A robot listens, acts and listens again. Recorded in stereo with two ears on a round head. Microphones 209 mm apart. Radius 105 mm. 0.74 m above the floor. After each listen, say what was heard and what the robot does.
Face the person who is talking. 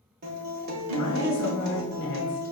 The woman speaking: about 55° left or 125° left. Turn 55° left.
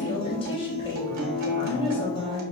So it is at 25° left. Turn 25° left.
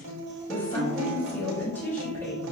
The woman speaking is now 10° left. Turn 10° left.
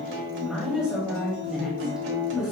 Found it: a woman speaking, straight ahead.